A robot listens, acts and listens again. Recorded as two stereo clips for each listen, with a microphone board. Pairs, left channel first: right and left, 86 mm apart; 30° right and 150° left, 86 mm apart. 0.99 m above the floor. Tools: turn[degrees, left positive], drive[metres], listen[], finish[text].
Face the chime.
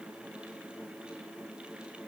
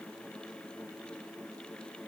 Action: listen[]
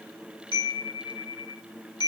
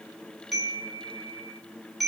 Thought: The chime: 120° right.
Action: turn[-120]
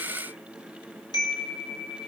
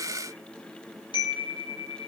Thought: The chime is now 50° right.
Action: turn[-50]
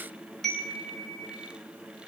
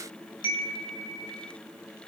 Action: finish[Found it: a chime, straight ahead.]